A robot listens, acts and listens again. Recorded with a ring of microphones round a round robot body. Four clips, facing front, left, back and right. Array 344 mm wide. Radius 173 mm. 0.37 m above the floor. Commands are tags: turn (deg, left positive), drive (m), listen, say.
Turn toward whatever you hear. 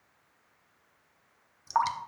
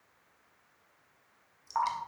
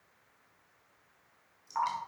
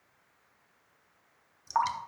<turn deg="-25"/>
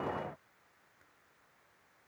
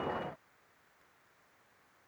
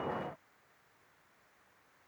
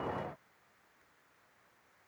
<listen/>
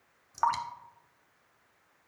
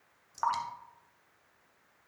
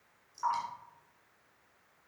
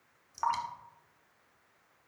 <turn deg="10"/>
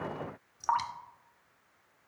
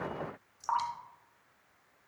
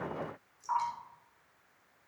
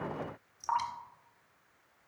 <say>Facing the dripping.</say>